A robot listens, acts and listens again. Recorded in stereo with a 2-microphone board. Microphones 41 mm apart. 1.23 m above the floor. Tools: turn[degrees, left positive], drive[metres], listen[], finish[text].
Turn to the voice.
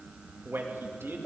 Action: turn[-90]
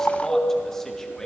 Action: listen[]
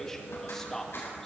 Thought: The man speaking is now 15° left.
Action: turn[15]
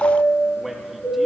Action: finish[Found it: a man speaking, straight ahead, 2 to 4 m away.]